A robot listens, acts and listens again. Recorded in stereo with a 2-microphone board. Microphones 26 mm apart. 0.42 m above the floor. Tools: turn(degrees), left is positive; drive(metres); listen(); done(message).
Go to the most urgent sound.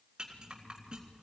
listen()
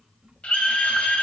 turn(degrees=55)
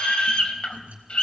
turn(degrees=50)
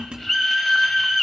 drive(metres=1.0)
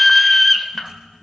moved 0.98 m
turn(degrees=10)
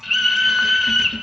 drive(metres=1.0)
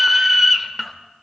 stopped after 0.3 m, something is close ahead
turn(degrees=-10)
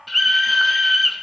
done("Arrived at the scream, straight ahead.")